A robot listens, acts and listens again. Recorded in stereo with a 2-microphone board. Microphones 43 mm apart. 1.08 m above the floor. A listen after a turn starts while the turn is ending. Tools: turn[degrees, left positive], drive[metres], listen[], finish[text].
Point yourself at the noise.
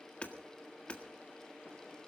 Thought: The hammering: about 30° left or 150° left.
Action: turn[30]
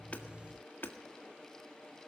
Thought: So it is at 125° left.
Action: turn[125]
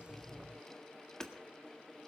Thought: The hammering is now 15° left.
Action: turn[15]
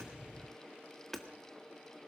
Action: finish[Facing the hammering.]